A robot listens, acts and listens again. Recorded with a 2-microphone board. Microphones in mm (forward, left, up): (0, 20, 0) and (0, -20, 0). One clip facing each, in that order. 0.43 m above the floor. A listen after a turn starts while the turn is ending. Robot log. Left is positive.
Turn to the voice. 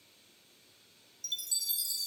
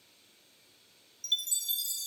cmd idle
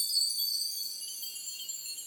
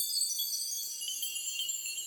cmd idle
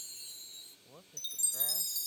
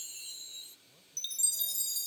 note: The man speaking: about 50° left or 130° left.
cmd yaw +50
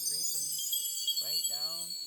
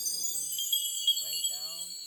cmd idle
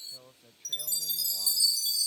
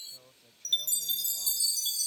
note: So it is at 20° left.
cmd yaw +20
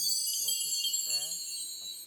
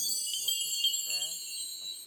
cmd idle
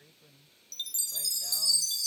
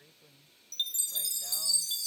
end: Facing the man speaking.